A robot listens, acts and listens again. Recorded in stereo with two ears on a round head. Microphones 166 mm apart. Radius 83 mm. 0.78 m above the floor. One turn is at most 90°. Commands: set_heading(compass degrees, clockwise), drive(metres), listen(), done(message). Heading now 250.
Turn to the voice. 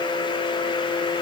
listen()
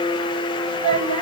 set_heading(295)
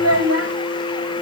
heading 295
set_heading(25)
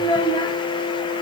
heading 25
set_heading(5)
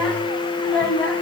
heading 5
set_heading(355)
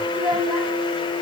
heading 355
done("Found it: a child speaking, straight ahead, 2 to 4 m away.")